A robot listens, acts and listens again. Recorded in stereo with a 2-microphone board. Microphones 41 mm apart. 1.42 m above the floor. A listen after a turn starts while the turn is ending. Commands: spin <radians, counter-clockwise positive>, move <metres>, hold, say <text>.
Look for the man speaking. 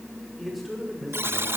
spin 0.52
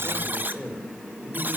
spin 2.71
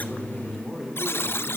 say Found it: a man speaking, straight ahead.